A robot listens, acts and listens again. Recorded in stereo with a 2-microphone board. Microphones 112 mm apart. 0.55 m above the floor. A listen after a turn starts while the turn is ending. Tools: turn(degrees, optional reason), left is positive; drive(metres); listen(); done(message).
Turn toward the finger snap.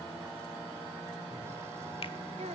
listen()
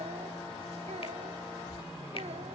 listen()
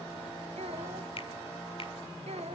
turn(degrees=55, reason="The finger snap: about 55° left or 125° left.")
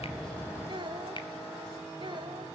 listen()
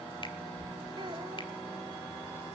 listen()
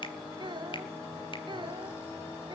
done("I heard a finger snap, but can't make it out now. It was about straight ahead or 70° left.")